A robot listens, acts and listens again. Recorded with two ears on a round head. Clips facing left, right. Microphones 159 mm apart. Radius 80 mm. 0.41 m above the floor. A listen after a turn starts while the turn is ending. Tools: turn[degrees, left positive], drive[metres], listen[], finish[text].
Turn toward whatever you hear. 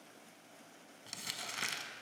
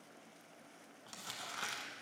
Thought: The crumpling: about 30° left or 150° left.
Action: turn[30]
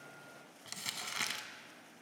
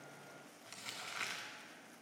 Thought: So it is at 120° left.
Action: turn[120]
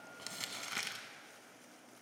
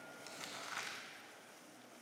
Thought: The crumpling is now 40° left.
Action: turn[40]
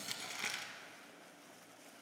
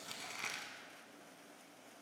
Action: finish[Found it: crumpling, straight ahead, under 1 m away.]